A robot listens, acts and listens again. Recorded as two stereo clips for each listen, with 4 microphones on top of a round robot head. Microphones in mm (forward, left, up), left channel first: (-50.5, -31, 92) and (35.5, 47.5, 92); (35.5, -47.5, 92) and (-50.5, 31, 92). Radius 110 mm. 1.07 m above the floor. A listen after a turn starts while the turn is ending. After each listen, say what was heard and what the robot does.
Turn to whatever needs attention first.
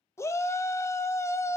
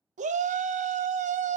The shout: 155° left. Turn 155° left.
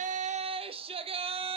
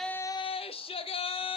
Facing the shout, under 1 m away.